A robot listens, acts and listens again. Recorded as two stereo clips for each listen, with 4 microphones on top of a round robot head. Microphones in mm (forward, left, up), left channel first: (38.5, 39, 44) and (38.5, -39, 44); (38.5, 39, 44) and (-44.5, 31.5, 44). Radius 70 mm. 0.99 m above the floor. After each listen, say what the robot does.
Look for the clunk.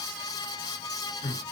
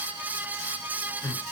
Keep listening.
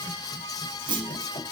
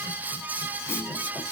Turn 65° right.
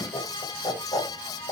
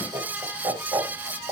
Facing where the clunk came from. I can't hear it now.